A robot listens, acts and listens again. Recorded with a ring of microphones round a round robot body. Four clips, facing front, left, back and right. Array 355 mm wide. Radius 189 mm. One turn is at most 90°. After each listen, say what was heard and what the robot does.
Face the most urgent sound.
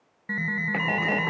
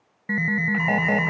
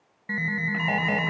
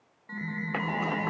The alarm: 80° left. Turn 80° left.
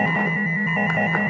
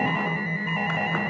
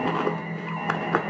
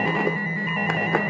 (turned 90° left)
The alarm is now 10° right. Turn 10° right.
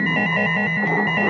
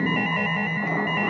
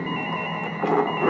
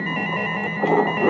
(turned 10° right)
Facing the alarm.